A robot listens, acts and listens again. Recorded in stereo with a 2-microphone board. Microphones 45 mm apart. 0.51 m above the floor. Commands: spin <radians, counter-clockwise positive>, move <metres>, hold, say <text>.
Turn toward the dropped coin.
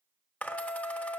spin 0.61
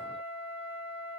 hold
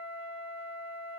say I heard a dropped coin, but can't make it out now. It was about straight ahead or 110° left.